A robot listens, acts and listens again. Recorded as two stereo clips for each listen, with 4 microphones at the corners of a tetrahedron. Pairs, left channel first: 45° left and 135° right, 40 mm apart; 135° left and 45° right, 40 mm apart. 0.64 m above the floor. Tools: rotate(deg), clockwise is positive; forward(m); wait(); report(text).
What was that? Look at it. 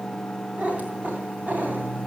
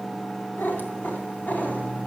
rotate(-180)
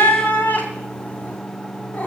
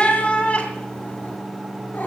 rotate(-95)
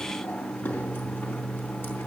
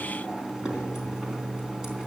wait()
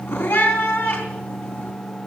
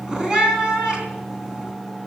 rotate(-30)
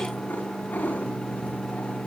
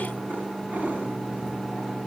report("Facing the cat meowing, 2 to 4 m away.")